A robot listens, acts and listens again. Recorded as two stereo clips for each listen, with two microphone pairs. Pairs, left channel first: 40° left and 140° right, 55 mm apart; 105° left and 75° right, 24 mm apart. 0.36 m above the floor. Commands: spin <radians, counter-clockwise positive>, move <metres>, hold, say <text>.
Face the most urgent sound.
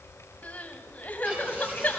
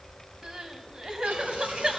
spin -0.35
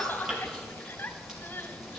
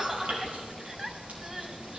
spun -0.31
say Facing the crying.